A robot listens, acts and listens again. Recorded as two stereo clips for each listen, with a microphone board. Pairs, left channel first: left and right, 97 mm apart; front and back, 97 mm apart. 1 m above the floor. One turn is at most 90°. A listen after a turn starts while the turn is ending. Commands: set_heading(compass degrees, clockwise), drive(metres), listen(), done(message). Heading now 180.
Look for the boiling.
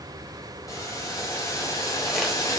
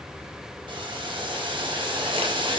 set_heading(90)
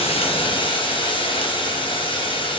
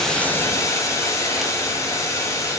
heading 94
set_heading(34)
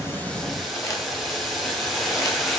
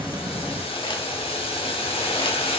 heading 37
done("Found it: boiling, straight ahead, under 1 m away.")